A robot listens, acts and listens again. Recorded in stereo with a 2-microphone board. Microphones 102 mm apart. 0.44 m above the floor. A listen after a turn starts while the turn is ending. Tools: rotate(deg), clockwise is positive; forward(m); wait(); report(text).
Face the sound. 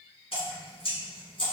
rotate(-70)
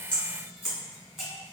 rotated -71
report("Found it: dripping, straight ahead.")